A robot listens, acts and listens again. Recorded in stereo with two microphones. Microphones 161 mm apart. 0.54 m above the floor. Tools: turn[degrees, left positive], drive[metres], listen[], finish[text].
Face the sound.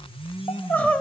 Action: turn[30]
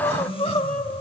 Thought: So it is at 140° left.
Action: turn[140]
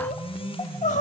Thought: The crying is now 50° left.
Action: turn[50]
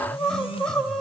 Action: finish[Facing the crying, 1 to 2 m away.]